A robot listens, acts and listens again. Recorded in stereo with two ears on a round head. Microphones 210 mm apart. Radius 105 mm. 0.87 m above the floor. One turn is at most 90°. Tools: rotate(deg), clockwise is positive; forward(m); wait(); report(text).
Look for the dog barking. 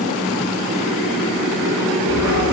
rotate(30)
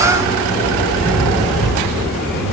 report("Found it: a dog barking, straight ahead.")